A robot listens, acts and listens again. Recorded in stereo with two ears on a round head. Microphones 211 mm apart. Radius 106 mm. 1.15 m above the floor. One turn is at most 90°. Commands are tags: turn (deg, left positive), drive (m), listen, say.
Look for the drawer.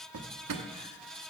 <turn deg="-90"/>
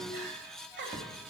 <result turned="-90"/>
<listen/>
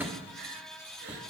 <say>Found it: a drawer, straight ahead.</say>